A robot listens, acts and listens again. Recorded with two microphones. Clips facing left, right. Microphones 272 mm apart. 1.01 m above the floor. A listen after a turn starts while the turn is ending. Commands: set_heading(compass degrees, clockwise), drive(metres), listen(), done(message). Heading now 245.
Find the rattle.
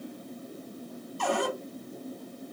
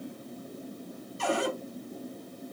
listen()
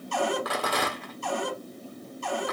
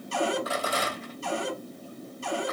set_heading(175)
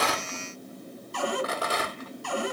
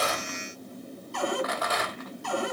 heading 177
set_heading(142)
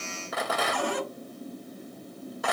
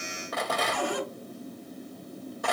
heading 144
done("Facing the rattle.")